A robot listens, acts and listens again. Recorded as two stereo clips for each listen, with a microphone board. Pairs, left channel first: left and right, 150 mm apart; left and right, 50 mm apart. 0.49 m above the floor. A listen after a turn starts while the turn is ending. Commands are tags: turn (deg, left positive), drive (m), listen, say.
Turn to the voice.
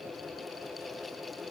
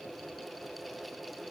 <listen/>
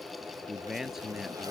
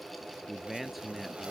<turn deg="-30"/>
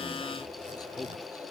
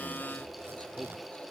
<listen/>
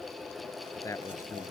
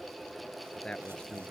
<turn deg="20"/>
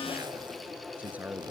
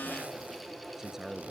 <turn deg="-10"/>
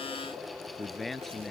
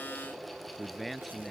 <say>Facing the man speaking.</say>